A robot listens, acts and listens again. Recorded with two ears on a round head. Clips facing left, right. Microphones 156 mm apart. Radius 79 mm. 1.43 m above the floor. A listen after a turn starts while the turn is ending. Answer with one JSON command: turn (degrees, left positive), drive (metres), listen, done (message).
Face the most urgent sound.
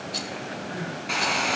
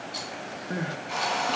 {"turn": -55}
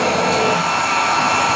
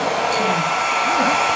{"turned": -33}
{"listen": true}
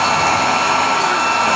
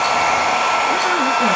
{"listen": true}
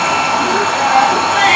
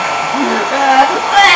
{"turn": -90}
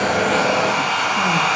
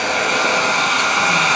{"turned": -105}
{"turn": 15}
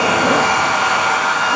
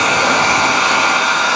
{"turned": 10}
{"listen": true}
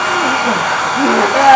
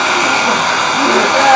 {"done": "Found it: crying, straight ahead."}